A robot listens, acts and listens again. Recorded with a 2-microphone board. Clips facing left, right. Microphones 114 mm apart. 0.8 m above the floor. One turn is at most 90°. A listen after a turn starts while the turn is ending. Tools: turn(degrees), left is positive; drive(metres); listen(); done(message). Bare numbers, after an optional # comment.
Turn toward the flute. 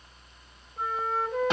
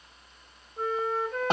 turn(30)
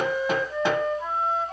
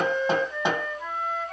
# So it is at 145° left.
turn(90)
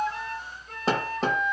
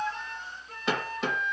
# The flute is now 80° left.
turn(80)
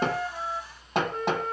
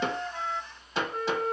# The flute is now 35° left.
turn(35)
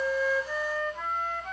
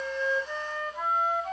# The flute is now 15° right.
turn(-15)
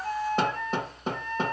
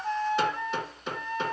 done("Found it: a flute, straight ahead, 1 to 2 m away.")